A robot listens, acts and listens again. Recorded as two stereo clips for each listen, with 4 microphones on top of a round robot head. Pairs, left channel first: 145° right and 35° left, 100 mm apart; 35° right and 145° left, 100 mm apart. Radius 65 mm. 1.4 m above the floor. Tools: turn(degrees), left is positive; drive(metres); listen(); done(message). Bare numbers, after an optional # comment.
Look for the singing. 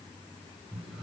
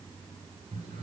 listen()
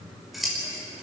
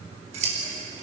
listen()
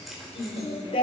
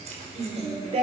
# The singing: 175° left.
turn(175)
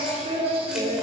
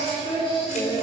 done("Found it: singing, straight ahead, over 4 m away.")